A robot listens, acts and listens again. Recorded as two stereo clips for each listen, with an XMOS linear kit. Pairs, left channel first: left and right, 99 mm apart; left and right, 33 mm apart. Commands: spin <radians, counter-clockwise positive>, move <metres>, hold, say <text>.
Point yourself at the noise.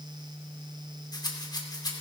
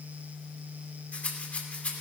spin 0.79
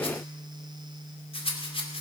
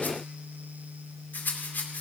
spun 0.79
spin 1.48
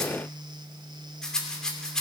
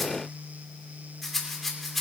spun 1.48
say Facing the rattle.